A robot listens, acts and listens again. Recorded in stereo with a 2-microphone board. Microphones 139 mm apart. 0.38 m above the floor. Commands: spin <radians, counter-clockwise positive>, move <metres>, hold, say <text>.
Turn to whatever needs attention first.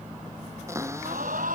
spin -1.57
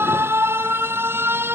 spin -0.26
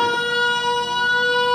say Facing the alarm.